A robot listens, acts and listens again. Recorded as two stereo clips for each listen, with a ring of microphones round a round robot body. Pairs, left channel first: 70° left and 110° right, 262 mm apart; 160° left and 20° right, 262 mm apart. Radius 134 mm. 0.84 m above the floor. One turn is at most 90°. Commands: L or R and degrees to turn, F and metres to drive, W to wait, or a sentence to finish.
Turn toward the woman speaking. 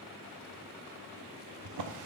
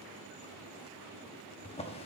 W
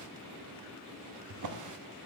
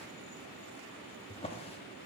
W
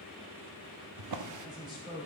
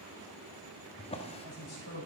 L90
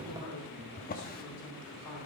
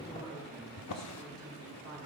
L60
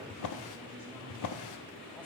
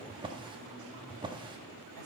W
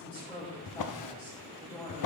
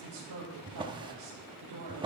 R15
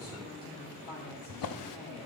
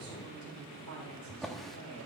Found it: a woman speaking, straight ahead.